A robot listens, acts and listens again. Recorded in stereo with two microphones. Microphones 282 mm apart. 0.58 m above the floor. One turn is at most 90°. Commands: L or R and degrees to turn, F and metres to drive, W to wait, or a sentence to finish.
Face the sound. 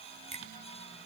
R25
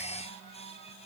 W
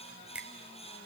Found it: a finger snap, straight ahead, 1 to 2 m away.